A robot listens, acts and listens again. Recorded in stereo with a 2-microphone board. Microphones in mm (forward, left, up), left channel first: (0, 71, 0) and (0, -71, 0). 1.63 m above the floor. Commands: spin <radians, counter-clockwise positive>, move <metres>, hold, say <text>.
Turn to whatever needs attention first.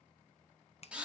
hold
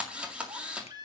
spin -0.52
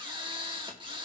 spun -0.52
hold
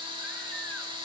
hold
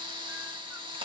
say I heard a baby crying, but can't make it out now. It was about straight ahead or 120° right.